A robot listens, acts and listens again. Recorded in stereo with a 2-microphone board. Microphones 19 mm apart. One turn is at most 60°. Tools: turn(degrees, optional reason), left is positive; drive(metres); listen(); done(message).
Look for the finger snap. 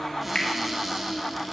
turn(degrees=60, reason="The finger snap: about 60° left or 120° left.")
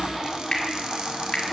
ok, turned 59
turn(degrees=55, reason="So it is at 55° left.")
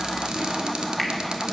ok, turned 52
listen()
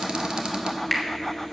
done("Found it: a finger snap, straight ahead.")